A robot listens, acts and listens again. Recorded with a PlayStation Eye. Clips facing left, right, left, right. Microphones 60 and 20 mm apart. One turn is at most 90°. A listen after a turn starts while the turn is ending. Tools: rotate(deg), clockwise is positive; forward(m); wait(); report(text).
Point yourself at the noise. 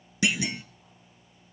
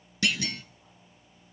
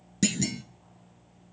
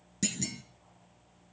rotate(-15)
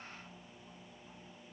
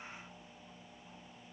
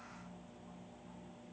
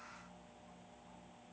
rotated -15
wait()
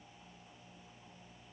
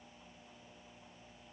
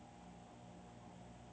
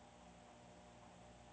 report("I heard a clunk, but can't make it out now. It was about straight ahead or 150° left.")